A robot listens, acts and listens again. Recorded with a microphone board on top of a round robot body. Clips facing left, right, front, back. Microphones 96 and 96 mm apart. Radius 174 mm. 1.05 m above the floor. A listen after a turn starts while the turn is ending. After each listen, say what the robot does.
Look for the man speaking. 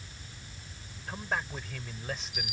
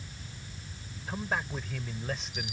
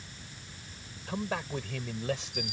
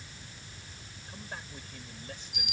Found it: a man speaking, straight ahead.